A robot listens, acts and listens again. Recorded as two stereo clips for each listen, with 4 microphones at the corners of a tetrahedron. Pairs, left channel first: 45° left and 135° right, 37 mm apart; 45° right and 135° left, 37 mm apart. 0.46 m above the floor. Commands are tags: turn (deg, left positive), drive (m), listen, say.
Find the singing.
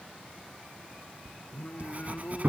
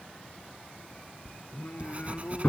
<say>Found it: singing, straight ahead.</say>